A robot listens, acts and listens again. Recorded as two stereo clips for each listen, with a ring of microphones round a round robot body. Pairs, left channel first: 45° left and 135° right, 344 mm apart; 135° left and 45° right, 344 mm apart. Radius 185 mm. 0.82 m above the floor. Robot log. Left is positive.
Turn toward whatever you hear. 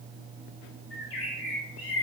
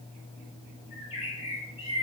note: The bird: 60° left.
cmd yaw +60
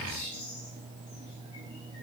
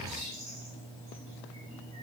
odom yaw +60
end: Found it: a bird, straight ahead.